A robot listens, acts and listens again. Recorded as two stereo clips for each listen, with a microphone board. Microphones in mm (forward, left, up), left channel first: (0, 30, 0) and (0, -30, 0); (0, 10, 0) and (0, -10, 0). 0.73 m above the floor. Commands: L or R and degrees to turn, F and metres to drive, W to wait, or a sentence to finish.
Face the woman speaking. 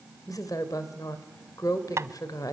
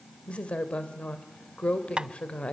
L90
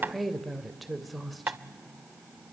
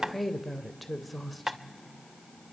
Found it: a woman speaking, straight ahead.